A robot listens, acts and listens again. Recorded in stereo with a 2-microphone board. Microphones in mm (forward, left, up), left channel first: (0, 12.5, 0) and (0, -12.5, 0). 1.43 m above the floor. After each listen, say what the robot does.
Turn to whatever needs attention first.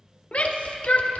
Turn 60° left.
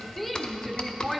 Found it: a shout, straight ahead.